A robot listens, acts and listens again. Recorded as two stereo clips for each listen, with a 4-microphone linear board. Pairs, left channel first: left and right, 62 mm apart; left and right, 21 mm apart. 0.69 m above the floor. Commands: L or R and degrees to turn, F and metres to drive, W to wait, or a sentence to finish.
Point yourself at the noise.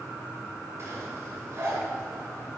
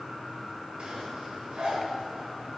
R50
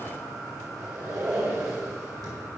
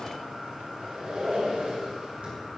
R85
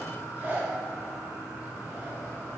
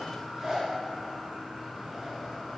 R30
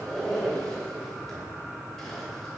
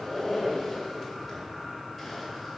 Found it: a zipper, straight ahead.